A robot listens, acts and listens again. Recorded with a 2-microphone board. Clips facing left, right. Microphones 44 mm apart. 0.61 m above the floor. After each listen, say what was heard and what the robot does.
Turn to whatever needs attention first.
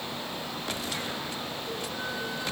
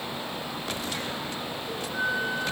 Keep listening.
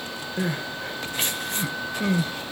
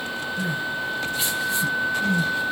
The crying: about 50° left or 130° left. Turn 50° left.
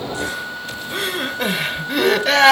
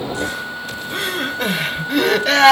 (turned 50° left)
Facing the crying, under 1 m away.